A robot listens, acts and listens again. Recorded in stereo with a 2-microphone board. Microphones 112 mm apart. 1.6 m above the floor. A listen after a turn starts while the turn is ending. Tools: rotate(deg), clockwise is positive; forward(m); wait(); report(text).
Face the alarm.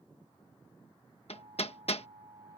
rotate(55)
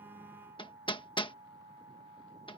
rotate(70)
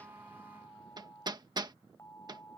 rotate(-25)
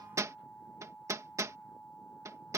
rotate(-10)
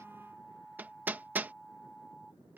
report("Facing the alarm.")